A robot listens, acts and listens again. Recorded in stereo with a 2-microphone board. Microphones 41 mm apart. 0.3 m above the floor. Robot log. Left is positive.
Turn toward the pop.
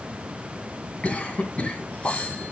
note: The pop: about 70° left or 110° left.
cmd yaw +70
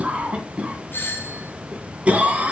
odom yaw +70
cmd idle
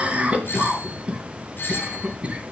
end: I heard a pop, but can't make it out now. It was about straight ahead or 40° left.